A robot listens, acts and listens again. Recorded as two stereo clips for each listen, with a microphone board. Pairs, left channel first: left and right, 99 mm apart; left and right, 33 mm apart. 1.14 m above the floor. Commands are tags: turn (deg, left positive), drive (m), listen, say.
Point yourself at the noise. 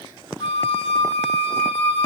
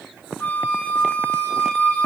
<turn deg="90"/>
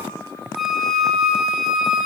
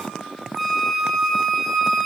<say>Found it: a flute, straight ahead, 1 to 2 m away.</say>